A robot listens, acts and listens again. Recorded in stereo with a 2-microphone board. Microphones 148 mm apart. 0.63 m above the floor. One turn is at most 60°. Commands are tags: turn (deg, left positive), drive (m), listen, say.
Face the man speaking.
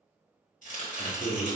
<turn deg="50"/>
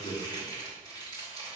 <turn deg="60"/>
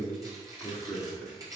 <turn deg="10"/>
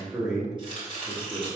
<say>Facing the man speaking.</say>